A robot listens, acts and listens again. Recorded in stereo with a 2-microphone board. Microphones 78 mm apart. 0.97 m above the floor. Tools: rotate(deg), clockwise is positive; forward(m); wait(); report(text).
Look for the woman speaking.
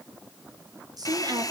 rotate(60)
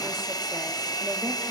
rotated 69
wait()
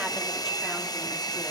wait()
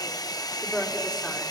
rotate(-10)
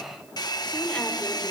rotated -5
wait()
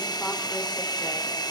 wait()
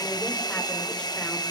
report("Facing where the woman speaking came from. I can't hear it now.")